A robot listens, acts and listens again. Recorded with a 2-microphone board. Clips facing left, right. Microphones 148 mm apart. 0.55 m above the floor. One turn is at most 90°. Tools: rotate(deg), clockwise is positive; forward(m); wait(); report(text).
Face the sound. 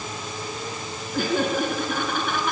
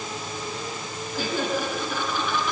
rotate(-55)
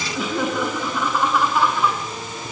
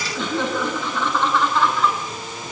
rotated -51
rotate(-10)
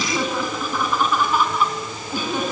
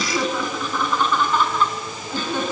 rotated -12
rotate(-10)
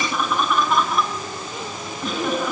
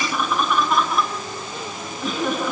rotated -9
report("Found it: laughter, straight ahead, over 4 m away.")